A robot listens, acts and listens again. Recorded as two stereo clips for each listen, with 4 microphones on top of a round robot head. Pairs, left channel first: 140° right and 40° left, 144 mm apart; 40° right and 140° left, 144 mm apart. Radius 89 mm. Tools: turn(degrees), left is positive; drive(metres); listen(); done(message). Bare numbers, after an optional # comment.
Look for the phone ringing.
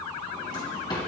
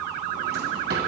listen()
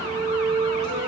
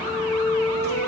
listen()
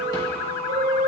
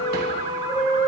done("I can't make out a phone ringing to turn to.")